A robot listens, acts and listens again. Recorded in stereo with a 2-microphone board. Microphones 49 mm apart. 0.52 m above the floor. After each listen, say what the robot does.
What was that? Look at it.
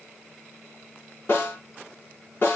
Turn 50° left.
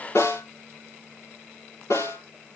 Turn 80° left.
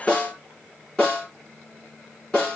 Turn 15° left.
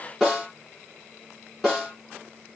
Facing the snare drum, over 4 m away.